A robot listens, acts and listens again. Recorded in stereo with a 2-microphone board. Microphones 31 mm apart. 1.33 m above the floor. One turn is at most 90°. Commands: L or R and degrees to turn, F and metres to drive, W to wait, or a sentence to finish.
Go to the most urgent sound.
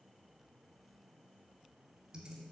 W
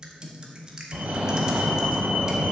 R55
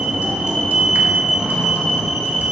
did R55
R15
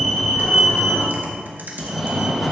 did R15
F1.0
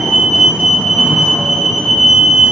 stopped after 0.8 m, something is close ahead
I am next to the fire alarm.